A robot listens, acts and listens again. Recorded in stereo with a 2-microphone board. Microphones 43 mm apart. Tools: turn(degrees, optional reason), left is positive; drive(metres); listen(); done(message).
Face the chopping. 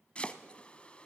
turn(degrees=25, reason="The chopping: about 25° left or 155° left.")
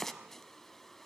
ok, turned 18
turn(degrees=10, reason="So it is at 10° left.")
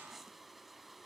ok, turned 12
done("Found it: chopping, straight ahead.")